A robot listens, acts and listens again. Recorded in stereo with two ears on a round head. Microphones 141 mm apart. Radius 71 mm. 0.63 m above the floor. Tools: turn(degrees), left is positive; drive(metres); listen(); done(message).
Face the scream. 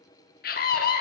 turn(degrees=60)
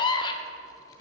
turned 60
turn(degrees=30)
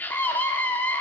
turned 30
turn(degrees=15)
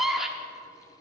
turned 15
done("Found it: a scream, straight ahead, under 1 m away.")